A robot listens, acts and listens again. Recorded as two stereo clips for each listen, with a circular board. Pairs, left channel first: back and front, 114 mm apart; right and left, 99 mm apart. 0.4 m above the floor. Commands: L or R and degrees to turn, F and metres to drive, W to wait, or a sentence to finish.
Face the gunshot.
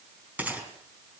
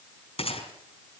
R75
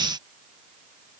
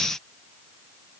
I heard a gunshot from this way, but can't make it out now.